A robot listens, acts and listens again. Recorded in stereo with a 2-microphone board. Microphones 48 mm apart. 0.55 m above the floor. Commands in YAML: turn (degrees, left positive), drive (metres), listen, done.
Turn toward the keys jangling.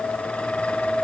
listen: true
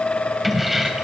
turn: -30
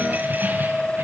listen: true
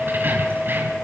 turn: -135
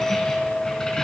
turn: 15
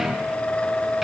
listen: true
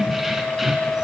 done: "Facing the keys jangling."